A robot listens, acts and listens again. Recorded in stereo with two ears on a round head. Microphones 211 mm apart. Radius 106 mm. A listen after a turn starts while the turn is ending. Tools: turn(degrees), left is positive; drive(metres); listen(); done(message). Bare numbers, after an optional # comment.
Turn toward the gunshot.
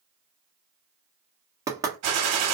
turn(-90)
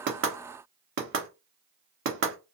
done("Facing where the gunshot came from. I can't hear it now.")